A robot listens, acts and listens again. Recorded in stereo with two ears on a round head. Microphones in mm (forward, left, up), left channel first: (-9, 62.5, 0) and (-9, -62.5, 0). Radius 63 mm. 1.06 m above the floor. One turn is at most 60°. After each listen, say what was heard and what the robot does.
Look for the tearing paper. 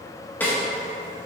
Keep listening.
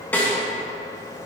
Keep listening.
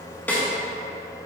I can't make out tearing paper to turn to.